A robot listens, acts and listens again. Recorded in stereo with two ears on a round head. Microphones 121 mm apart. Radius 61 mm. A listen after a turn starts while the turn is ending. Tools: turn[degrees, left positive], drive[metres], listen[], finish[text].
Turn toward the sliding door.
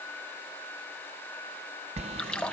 Thought: The sliding door: about 50° right or 130° right.
Action: turn[-50]
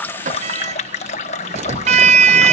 Thought: So it is at 65° right.
Action: turn[-65]
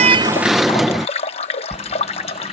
Action: finish[Found it: a sliding door, straight ahead.]